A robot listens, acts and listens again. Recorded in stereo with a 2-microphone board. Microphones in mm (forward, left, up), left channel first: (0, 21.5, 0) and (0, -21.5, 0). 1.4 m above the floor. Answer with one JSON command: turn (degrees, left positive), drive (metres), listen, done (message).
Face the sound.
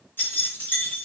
{"turn": 60}
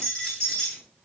{"turn": 10}
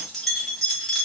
{"done": "Found it: keys jangling, straight ahead, 1 to 2 m away."}